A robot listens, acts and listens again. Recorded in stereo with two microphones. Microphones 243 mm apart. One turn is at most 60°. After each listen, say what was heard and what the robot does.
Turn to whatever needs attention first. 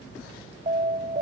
The alarm: about 35° right or 145° right. Turn 35° right.
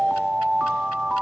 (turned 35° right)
Found it: an alarm, straight ahead.